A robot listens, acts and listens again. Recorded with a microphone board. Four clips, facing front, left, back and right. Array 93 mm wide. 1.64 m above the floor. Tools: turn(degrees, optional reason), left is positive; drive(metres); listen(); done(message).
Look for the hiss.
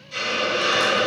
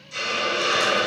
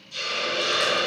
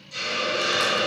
turn(degrees=15, reason="The hiss: 15° left.")
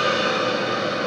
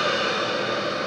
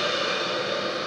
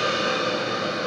done("Found it: a hiss, straight ahead.")